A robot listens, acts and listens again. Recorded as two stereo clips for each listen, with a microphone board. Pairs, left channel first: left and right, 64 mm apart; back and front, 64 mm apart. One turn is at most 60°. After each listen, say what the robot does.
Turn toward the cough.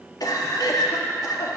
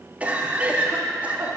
Turn 60° left.
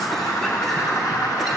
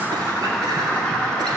Turn 10° left.
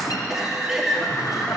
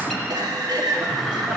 Found it: a cough, straight ahead.